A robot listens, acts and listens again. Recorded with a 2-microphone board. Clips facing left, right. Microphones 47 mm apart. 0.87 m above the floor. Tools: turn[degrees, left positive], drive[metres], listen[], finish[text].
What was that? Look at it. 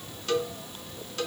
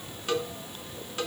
Thought: The cowbell: about 20° right or 160° right.
Action: turn[-20]
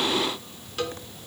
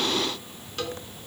Action: finish[Facing the cowbell.]